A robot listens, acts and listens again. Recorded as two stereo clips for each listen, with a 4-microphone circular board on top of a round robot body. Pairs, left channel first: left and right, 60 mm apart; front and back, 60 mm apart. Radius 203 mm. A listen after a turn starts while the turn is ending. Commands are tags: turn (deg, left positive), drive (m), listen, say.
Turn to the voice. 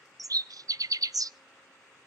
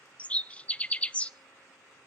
<listen/>
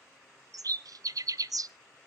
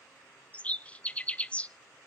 <listen/>
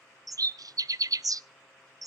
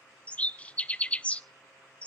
<say>I can't make out anyone speaking, only a bird.</say>